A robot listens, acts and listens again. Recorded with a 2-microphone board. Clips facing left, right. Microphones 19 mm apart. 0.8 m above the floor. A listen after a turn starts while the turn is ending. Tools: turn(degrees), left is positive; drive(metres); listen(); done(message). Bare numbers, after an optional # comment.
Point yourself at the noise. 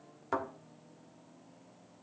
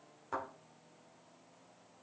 # The thud: about 25° left or 155° left.
turn(25)
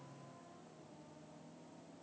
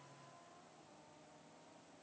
listen()
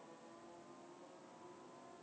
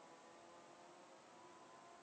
done("I heard a thud, but can't make it out now. It was about straight ahead or 130° left.")